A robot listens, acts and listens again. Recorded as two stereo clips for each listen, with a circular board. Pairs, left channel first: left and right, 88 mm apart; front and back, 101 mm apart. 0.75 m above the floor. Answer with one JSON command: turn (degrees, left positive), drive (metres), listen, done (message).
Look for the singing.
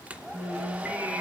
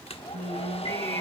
{"turn": -160}
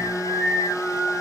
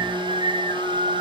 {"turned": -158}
{"done": "Facing the singing."}